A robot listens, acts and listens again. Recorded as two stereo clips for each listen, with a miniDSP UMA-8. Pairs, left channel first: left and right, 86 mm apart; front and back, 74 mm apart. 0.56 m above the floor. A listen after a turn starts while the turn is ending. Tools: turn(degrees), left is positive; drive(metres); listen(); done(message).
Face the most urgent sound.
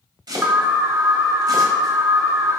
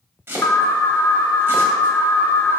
turn(degrees=-40)
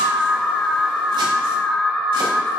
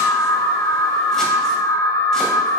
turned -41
done("Facing the alarm.")